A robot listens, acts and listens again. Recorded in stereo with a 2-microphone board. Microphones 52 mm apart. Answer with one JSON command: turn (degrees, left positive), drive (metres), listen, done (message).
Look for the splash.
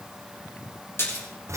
{"turn": 50}
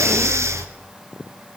{"listen": true}
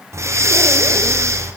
{"done": "I heard a splash, but can't make it out now. It was about straight ahead or 80° left."}